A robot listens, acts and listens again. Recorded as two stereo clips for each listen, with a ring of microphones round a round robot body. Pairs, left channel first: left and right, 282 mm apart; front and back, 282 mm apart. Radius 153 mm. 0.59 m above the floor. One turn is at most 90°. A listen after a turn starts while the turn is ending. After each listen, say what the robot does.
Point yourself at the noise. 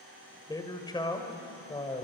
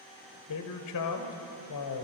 Turn 20° left.
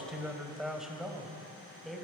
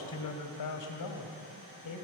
Facing the man speaking, 2 to 4 m away.